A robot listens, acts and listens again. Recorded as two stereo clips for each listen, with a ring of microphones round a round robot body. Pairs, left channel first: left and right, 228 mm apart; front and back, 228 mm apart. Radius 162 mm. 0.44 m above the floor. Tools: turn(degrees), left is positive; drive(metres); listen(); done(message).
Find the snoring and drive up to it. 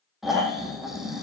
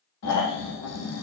drive(metres=1.0)
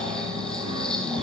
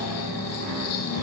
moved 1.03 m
drive(metres=1.0)
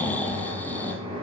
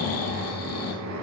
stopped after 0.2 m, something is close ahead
listen()
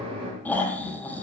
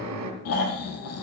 done("Blocked. The snoring is further on, straight ahead.")